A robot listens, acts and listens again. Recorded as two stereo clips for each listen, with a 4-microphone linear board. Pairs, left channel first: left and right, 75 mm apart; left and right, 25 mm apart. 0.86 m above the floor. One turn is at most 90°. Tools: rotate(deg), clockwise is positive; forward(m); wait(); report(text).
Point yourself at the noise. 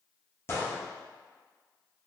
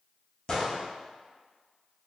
rotate(-35)
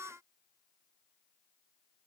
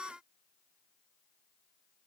wait()
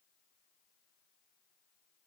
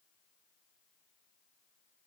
report("I heard a gunshot, but can't make it out now. It was about straight ahead or 110° left.")